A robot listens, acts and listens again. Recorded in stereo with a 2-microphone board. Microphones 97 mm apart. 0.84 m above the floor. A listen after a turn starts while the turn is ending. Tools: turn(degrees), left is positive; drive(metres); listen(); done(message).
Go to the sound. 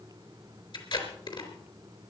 turn(degrees=55)
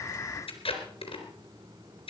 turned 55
turn(degrees=70)
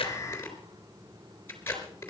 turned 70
turn(degrees=25)
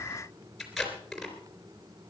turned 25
drive(metres=1.0)
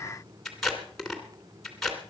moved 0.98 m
drive(metres=1.0)
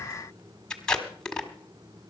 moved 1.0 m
turn(degrees=10)
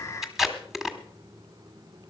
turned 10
drive(metres=1.0)
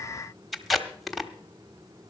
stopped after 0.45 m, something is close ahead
done("Arrived at the tape being pulled, straight ahead.")